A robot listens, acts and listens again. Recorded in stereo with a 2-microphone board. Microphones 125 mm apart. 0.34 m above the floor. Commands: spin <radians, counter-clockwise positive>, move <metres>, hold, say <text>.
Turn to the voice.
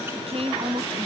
spin -0.96
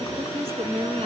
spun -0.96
spin -1.13
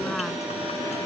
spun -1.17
hold
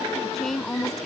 say Found it: a woman speaking, straight ahead.